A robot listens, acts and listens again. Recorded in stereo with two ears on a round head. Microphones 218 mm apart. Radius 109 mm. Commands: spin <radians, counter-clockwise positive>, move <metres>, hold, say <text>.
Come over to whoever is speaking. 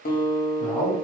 spin 0.52
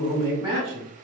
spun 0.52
spin -0.35
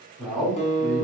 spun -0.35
move 1.0
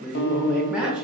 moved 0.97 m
move 1.0
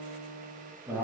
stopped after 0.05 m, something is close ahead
spin -0.17
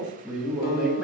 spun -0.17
say Arrived at the man speaking, straight ahead.